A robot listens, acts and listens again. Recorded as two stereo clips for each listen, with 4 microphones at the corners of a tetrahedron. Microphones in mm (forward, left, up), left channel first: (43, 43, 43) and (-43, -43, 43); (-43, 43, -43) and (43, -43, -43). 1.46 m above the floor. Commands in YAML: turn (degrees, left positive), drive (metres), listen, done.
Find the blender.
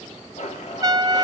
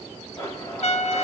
turn: 70
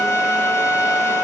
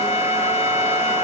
listen: true
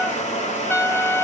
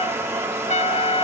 turn: 25
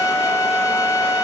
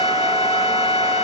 listen: true
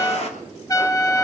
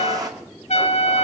turn: 15
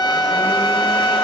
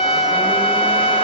listen: true
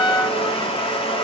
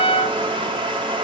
done: "Found it: a blender, straight ahead, 2 to 4 m away."